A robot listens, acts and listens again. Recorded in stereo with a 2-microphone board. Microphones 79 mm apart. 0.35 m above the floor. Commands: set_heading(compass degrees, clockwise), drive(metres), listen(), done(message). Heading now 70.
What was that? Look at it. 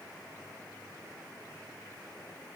listen()
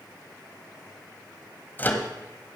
set_heading(45)
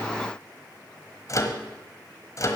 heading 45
set_heading(275)
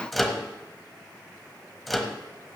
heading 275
done("Facing the microwave, 1 to 2 m away.")